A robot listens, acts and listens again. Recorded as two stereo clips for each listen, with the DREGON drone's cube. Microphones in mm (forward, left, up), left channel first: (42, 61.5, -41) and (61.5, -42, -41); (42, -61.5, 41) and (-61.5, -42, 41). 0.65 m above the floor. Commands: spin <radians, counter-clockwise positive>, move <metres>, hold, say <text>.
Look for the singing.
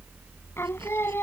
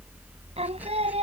spin 2.97
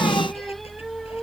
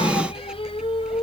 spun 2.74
spin 0.26
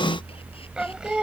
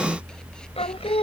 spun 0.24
say Found it: singing, straight ahead.